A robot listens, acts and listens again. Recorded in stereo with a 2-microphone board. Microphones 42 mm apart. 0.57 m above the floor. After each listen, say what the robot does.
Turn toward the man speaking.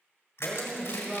Turn 30° left.
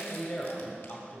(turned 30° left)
Turn 130° left.
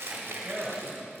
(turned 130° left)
Turn 15° right.
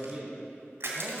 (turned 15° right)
Facing the man speaking, 2 to 4 m away.